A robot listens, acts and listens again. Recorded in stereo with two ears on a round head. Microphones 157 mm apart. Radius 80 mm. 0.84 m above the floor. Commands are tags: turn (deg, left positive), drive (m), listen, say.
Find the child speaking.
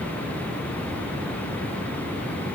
<listen/>
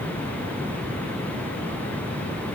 <listen/>
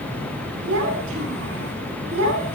<turn deg="-90"/>
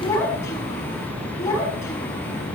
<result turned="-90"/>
<turn deg="15"/>
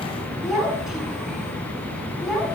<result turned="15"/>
<say>Found it: a child speaking, straight ahead.</say>